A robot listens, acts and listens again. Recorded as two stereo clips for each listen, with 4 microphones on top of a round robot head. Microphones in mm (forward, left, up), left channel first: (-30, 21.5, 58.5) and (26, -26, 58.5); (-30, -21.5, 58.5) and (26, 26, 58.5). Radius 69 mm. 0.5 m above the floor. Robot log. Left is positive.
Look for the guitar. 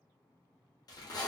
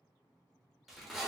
cmd idle
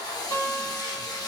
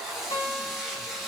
note: The guitar: 165° right.
cmd yaw -165
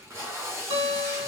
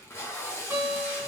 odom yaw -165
note: The guitar is now 20° right.
cmd yaw -20
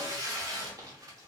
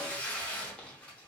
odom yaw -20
cmd idle
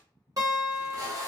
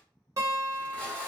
end: Found it: a guitar, straight ahead, 1 to 2 m away.